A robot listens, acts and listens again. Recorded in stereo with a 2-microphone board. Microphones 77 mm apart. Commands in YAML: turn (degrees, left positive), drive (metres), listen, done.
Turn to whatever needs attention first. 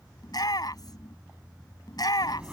turn: 55
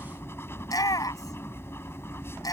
turn: 60
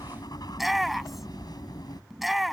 done: "Found it: a shout, straight ahead."